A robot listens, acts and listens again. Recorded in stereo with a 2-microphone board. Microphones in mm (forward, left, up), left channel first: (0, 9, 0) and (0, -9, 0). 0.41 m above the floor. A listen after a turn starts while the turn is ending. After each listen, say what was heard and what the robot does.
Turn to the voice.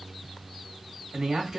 The man speaking: about 40° right or 140° right. Turn 40° right.
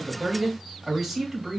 So it is at 10° right. Turn 10° right.
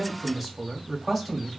Found it: a man speaking, straight ahead, 1 to 2 m away.